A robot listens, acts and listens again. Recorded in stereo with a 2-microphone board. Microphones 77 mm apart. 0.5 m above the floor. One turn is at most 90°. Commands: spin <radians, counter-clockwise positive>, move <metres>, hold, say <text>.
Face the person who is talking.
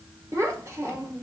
spin -0.61
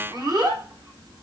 spin -1.57
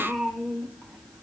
say Facing the child speaking, 1 to 2 m away.